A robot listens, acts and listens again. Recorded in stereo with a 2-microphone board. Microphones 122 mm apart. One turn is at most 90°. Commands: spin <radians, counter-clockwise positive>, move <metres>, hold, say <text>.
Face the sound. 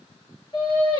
spin 0.61
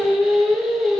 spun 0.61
say Found it: singing, straight ahead.